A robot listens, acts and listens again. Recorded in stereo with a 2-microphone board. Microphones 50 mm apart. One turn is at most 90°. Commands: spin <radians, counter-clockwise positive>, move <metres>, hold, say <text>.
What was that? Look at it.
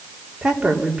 spin -0.35
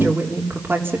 spin -1.57
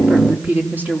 spin -0.61
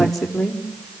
spin 0.17
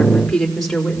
say Facing the woman speaking.